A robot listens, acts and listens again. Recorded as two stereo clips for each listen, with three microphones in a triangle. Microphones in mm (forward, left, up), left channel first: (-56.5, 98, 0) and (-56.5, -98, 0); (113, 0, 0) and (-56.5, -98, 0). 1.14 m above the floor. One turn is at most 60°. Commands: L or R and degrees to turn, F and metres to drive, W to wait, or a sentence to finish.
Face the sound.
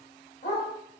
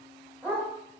L60
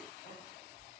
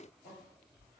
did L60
L50
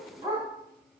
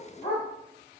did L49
R25
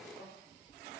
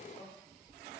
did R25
W
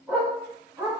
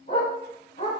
R15
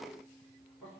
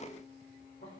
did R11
W
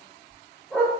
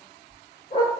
Found it: a dog barking, straight ahead, 2 to 4 m away.